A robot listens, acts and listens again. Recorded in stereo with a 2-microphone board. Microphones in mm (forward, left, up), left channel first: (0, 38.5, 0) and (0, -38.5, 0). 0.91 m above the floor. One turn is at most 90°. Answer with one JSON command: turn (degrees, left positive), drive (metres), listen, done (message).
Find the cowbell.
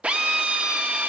{"listen": true}
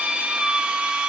{"listen": true}
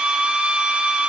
{"done": "I can't make out a cowbell, only a drill."}